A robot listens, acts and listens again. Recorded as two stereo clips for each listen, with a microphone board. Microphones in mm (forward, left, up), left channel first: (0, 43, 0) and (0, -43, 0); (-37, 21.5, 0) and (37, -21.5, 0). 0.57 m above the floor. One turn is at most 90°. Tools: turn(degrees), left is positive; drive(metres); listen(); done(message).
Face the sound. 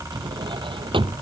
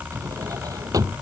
turn(degrees=-75)
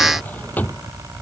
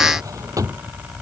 turn(degrees=20)
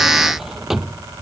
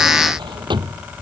done("Facing the drawer.")